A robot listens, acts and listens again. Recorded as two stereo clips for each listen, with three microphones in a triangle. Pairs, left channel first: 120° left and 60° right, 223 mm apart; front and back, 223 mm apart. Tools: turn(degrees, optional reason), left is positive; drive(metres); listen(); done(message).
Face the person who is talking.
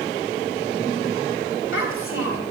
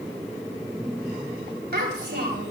turn(degrees=135, reason="The child speaking: 135° left.")
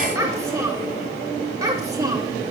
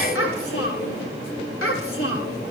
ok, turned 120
turn(degrees=15, reason="The child speaking is now 15° left.")
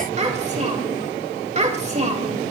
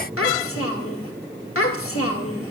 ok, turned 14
done("Found it: a child speaking, straight ahead, 2 to 4 m away.")